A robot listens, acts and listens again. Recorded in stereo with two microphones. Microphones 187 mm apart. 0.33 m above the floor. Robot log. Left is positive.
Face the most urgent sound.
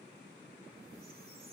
cmd idle
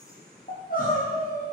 note: The crying: about 45° left or 135° left.
cmd yaw +45
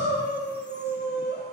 note: So it is at 90° left.
cmd yaw +90
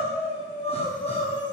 note: The crying is now 30° left.
cmd yaw +30
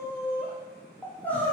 note: The crying is now 10° left.
cmd yaw +10
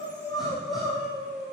end: Found it: crying, straight ahead, over 4 m away.